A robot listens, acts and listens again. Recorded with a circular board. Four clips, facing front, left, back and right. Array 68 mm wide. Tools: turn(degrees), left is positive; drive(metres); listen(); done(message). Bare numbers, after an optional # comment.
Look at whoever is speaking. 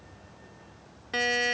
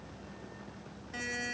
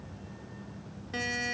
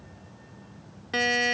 listen()
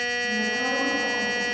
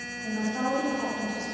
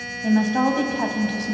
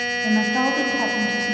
# The woman speaking: 140° right.
turn(-140)
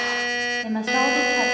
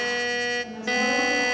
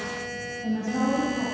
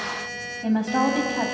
# The woman speaking is now 45° right.
turn(-45)
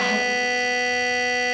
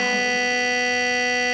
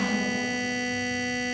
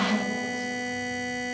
listen()
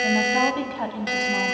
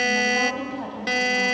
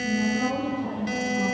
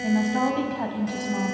# The woman speaking is now 20° right.
turn(-20)
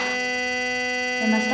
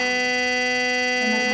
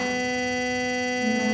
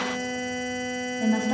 done("Facing the woman speaking.")